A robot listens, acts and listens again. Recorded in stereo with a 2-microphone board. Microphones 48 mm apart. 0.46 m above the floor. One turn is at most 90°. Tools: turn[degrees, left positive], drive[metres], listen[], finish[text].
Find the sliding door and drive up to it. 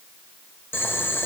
Action: listen[]
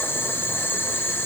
Action: listen[]
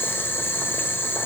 Action: finish[I can't make out a sliding door, only boiling.]